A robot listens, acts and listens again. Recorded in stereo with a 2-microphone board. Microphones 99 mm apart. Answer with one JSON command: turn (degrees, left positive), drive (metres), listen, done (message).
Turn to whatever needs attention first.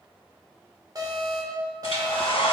{"turn": -40}
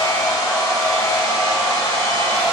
{"listen": true}
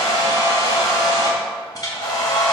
{"listen": true}
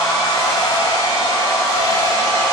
{"done": "I heard an alarm, but can't make it out now. It was about straight ahead or 100° right."}